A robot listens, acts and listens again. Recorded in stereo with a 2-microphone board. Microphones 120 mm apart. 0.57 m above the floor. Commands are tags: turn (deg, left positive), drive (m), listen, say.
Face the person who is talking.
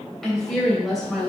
<turn deg="30"/>
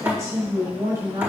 <turn deg="-30"/>
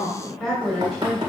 <say>Facing the woman speaking, 2 to 4 m away.</say>